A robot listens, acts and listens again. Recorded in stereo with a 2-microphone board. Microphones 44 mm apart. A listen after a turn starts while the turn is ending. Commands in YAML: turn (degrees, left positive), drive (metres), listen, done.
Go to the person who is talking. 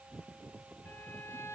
listen: true
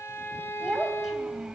turn: -30
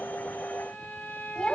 turn: 15
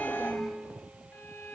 listen: true
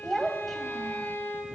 drive: 1.0
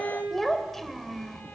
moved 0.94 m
drive: 1.0
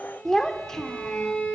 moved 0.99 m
turn: 15
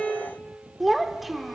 drive: 1.0
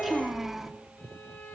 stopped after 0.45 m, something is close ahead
done: "I am next to the child speaking."